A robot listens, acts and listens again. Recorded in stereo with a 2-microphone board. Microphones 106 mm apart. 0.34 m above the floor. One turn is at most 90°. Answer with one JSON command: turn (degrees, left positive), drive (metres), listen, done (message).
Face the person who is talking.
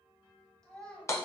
{"turn": 30}
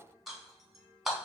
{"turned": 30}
{"listen": true}
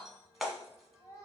{"turn": 90}
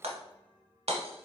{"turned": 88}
{"turn": 55}
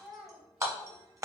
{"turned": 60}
{"done": "Facing the child speaking."}